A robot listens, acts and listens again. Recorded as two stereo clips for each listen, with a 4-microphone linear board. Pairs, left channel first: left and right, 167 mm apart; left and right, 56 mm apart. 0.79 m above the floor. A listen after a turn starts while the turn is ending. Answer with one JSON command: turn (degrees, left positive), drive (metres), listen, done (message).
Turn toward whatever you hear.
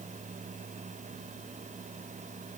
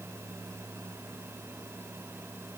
{"listen": true}
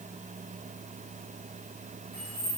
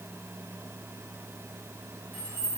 {"turn": -40}
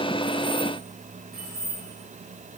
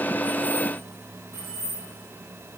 {"turn": -95}
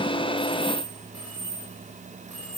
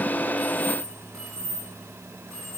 {"turn": -10}
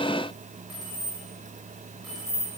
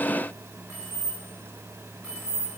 {"done": "Facing the keys jangling, over 4 m away."}